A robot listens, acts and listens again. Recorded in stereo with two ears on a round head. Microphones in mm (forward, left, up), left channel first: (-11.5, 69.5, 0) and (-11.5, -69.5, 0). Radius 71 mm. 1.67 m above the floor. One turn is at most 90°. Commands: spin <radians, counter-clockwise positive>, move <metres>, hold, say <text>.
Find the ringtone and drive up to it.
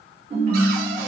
spin -0.79
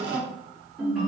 move 1.0
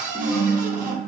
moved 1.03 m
spin -0.17
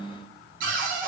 move 1.0
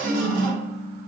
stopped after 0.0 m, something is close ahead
say Arrived at the ringtone, straight ahead.